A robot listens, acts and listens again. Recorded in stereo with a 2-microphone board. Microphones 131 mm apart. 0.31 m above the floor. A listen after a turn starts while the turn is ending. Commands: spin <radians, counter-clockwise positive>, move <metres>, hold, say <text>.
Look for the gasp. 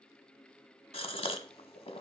spin 0.87
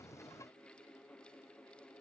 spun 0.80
hold
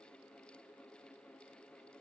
say I heard a gasp, but can't make it out now. It was about 5° left or 85° left.